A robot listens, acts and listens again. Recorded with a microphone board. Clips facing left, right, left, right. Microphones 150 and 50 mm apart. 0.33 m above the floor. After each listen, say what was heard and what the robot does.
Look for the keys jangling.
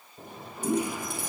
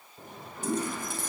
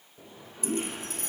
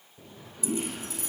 The keys jangling: about 60° left or 120° left. Turn 60° left.
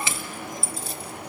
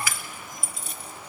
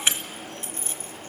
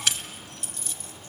So it is at 35° left. Turn 35° left.
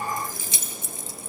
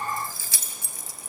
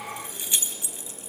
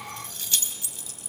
The keys jangling is now 30° left. Turn 30° left.
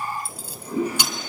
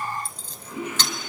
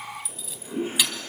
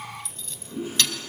The keys jangling is now 10° left. Turn 10° left.
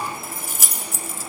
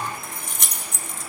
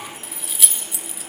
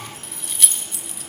Facing the keys jangling.